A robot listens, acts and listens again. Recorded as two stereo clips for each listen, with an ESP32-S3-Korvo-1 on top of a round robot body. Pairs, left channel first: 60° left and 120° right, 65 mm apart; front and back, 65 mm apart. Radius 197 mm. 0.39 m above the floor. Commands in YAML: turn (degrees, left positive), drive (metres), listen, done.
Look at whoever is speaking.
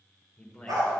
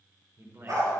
turn: 140
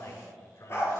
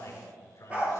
turn: 40
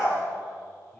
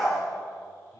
listen: true
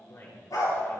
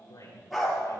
turn: 20
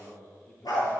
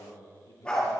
done: "Found it: a man speaking, straight ahead."